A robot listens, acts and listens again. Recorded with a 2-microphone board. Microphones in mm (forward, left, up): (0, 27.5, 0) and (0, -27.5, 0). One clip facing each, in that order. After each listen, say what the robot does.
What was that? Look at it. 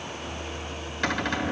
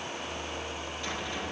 Turn 65° left.
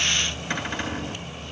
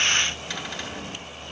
Turn 40° left.
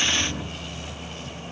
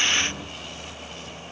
Keep listening.
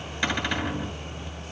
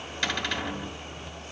Turn 15° left.
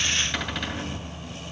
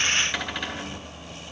Facing the cupboard door, 2 to 4 m away.